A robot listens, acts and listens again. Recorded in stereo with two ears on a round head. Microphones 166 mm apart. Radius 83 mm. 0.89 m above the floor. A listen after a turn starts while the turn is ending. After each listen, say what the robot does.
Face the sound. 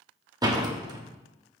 Turn 20° right.
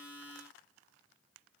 Keep listening.
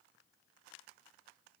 I heard a door slam, but can't make it out now. It was about straight ahead or 140° right.